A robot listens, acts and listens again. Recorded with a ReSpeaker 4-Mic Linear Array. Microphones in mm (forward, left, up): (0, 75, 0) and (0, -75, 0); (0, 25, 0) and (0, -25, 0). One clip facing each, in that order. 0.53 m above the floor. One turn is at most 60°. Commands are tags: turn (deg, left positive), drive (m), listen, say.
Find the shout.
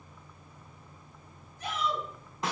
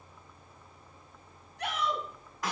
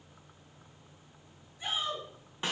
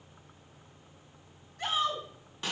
<turn deg="-60"/>
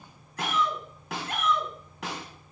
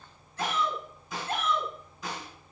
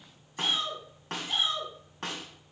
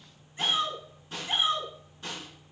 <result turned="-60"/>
<turn deg="-30"/>
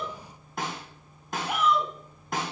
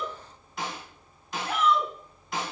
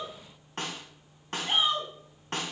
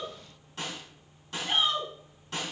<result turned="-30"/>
<turn deg="15"/>
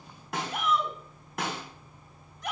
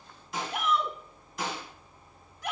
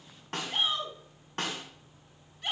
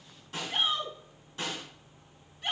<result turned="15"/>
<say>Found it: a shout, straight ahead.</say>